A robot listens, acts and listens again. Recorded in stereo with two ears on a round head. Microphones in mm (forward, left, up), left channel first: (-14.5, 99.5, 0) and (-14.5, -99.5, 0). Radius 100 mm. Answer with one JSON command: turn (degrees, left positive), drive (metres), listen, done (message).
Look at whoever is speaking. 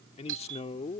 {"turn": 30}
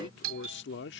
{"turn": 115}
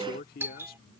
{"turn": 45}
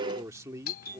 {"turn": -15}
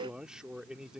{"done": "Facing the man speaking."}